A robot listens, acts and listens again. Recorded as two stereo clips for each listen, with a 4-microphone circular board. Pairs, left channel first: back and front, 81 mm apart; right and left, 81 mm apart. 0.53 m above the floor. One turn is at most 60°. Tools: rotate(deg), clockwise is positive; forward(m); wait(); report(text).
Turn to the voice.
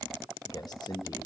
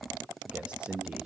rotate(-60)
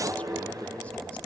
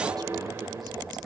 rotate(-60)
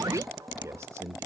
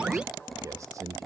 rotate(-50)
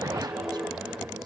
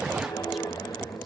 wait()
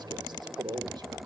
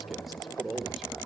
report("Found it: a man speaking, straight ahead.")